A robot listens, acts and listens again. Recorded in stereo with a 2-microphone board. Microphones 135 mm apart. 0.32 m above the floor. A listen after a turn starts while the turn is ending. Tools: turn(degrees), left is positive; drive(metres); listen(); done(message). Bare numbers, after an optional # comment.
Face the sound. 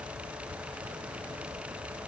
listen()
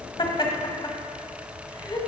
# The laughter: about 35° left or 145° left.
turn(35)
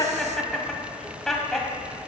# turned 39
done("Found it: laughter, straight ahead, 1 to 2 m away.")